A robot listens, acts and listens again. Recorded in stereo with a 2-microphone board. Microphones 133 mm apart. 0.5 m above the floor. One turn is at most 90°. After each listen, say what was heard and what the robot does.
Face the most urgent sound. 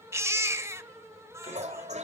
The baby crying: about 20° right or 160° right. Turn 20° right.
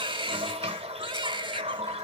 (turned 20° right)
So it is at 145° right. Turn 90° right.
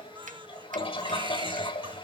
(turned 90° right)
Nothing new. It was at 55° right. Turn 55° right.
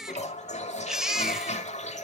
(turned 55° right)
Found it: a baby crying, straight ahead, under 1 m away.